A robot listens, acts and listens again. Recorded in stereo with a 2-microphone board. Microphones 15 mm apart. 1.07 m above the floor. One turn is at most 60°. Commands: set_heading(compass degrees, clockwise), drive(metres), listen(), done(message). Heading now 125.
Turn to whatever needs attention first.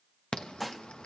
set_heading(65)
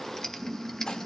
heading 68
set_heading(38)
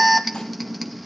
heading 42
done("Facing the alarm.")